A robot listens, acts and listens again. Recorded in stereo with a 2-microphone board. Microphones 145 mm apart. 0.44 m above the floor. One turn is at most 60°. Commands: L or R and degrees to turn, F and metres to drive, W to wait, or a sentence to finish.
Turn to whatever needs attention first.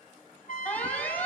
L30
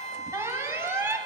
R20
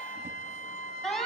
Facing the alarm.